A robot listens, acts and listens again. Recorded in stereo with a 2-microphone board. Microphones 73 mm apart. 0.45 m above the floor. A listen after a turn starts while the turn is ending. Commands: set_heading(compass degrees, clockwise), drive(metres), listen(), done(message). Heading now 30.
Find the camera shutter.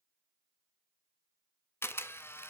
set_heading(355)
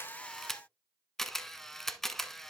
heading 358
done("Facing the camera shutter.")